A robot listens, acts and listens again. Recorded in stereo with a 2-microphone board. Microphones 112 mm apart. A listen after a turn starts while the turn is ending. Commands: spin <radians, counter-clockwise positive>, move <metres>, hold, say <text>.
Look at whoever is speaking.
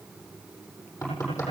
hold
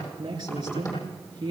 spin -0.70
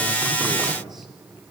hold
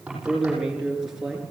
say Facing the man speaking, over 4 m away.